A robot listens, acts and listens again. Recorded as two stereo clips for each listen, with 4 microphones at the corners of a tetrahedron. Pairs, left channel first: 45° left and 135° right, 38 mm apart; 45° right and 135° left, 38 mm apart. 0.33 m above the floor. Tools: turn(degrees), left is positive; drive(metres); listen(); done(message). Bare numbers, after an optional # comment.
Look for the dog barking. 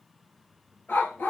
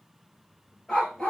# The dog barking: 25° left.
turn(25)
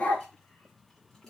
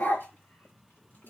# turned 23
done("Facing the dog barking.")